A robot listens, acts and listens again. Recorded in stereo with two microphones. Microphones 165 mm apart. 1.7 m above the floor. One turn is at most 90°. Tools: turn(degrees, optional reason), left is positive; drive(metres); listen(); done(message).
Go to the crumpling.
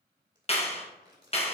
turn(degrees=-30, reason="The crumpling: about 30° right or 150° right.")
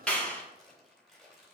drive(metres=1.0)
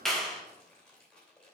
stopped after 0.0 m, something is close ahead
done("Blocked. The crumpling is further on, straight ahead.")